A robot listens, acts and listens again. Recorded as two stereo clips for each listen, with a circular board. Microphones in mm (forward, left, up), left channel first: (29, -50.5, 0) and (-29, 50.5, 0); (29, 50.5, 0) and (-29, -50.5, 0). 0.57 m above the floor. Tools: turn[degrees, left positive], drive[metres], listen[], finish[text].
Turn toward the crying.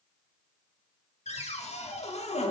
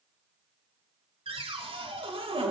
Action: listen[]
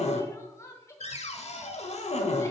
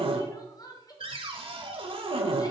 Action: finish[Facing the crying.]